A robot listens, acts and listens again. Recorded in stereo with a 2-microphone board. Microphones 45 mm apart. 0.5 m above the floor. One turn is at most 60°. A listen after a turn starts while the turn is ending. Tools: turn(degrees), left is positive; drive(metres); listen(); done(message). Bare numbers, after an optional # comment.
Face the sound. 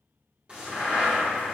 # The crack: about 25° right or 155° right.
turn(-25)
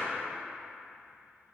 listen()
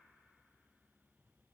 done("I heard a crack, but can't make it out now. It was about straight ahead or 130° right.")